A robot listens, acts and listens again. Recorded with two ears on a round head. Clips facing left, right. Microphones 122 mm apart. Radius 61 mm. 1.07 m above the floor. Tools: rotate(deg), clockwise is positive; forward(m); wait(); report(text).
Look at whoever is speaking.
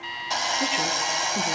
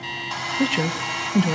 rotate(55)
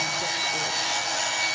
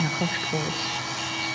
wait()
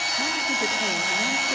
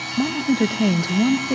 rotate(60)
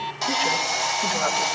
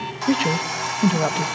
rotate(25)
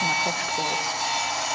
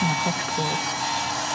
wait()
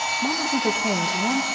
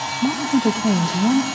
report("Facing the woman speaking, 1 to 2 m away.")